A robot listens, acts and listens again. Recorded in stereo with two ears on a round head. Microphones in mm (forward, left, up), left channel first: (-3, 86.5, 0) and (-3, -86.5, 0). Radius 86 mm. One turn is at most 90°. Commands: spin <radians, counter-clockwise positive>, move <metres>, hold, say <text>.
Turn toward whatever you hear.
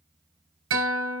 spin -1.57
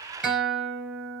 say Found it: a guitar, straight ahead, 2 to 4 m away.